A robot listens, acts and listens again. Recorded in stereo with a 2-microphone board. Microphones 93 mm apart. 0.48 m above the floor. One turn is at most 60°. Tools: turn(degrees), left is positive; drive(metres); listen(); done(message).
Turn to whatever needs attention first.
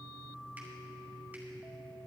listen()
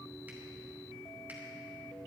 listen()
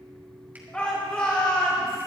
turn(degrees=30)
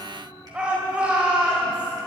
turn(degrees=-15)
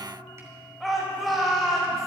done("Found it: a shout, straight ahead.")